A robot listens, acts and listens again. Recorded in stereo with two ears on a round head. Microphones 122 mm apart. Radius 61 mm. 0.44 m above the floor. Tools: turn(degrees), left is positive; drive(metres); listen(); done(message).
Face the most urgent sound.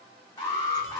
turn(degrees=25)
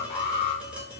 turn(degrees=125)
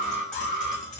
done("Found it: an alarm, straight ahead.")